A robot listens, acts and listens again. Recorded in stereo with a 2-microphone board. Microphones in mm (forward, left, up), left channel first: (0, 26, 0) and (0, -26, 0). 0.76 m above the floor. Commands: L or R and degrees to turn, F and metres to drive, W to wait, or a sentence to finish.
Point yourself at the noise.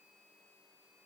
W
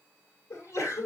L75
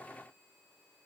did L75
W
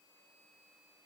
I heard a sneeze, but can't make it out now. It was about straight ahead or 30° left.